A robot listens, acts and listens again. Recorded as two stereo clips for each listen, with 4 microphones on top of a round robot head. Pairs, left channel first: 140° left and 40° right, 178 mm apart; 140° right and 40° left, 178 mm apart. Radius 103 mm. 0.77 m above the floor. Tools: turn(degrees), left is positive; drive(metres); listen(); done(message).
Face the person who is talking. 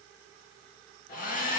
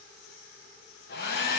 listen()
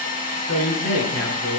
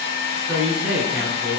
turn(degrees=125)
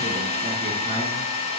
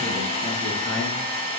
listen()
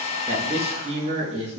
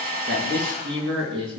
turn(degrees=15)
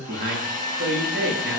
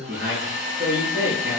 done("Found it: a man speaking, straight ahead.")